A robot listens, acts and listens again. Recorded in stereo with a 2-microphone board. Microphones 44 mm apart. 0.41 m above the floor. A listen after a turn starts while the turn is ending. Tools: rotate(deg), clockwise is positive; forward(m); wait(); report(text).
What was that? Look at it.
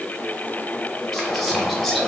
rotate(-30)
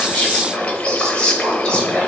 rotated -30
rotate(-150)
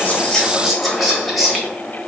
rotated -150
report("Found it: whispering, straight ahead.")